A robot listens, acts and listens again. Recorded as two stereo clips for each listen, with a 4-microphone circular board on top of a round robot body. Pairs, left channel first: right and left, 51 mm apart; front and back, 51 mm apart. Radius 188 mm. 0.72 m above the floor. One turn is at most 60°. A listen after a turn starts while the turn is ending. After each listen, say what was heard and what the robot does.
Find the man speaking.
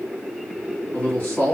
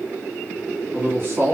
The man speaking: 135° right. Turn 60° right.
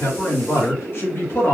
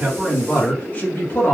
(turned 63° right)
The man speaking is now 45° right. Turn 45° right.
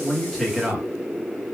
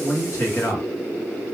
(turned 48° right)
The man speaking is now 15° left. Turn 15° left.
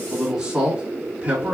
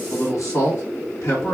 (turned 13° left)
The man speaking is now 30° left. Turn 30° left.
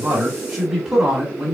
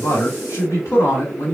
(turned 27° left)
Found it: a man speaking, straight ahead.